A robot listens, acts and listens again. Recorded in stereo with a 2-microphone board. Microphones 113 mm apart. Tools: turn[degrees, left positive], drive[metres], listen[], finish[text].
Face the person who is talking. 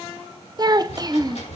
Thought: The child speaking: about 35° right or 145° right.
Action: turn[-35]
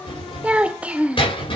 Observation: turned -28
Thought: So it is at 10° right.
Action: turn[-10]
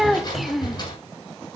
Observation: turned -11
Action: finish[Facing the child speaking.]